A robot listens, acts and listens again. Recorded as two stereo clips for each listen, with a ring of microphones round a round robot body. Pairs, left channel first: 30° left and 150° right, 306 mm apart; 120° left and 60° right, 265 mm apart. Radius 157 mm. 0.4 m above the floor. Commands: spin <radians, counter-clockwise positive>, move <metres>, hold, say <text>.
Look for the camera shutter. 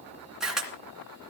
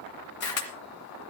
spin 2.09
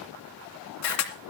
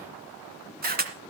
say Found it: a camera shutter, straight ahead, 2 to 4 m away.